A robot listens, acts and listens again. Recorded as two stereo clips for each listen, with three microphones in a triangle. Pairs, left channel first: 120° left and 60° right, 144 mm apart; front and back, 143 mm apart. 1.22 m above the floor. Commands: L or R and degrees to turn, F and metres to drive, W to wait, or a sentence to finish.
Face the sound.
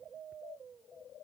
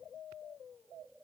W
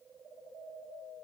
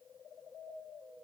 W
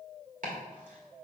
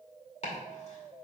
R40
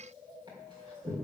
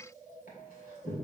Found it: chopping, straight ahead, 2 to 4 m away.